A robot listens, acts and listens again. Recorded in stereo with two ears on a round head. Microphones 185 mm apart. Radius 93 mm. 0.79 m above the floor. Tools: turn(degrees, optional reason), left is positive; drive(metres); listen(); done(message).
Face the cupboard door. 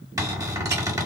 turn(degrees=-15, reason="The cupboard door: about 15° right or 165° right.")
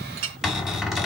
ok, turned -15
done("Facing the cupboard door.")